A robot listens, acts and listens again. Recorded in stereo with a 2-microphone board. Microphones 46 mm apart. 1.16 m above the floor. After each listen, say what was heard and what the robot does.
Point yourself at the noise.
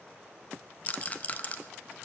The rattle: about 30° left or 150° left. Turn 30° left.
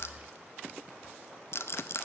So it is at 115° left. Turn 115° left.
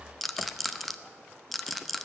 Facing the rattle, under 1 m away.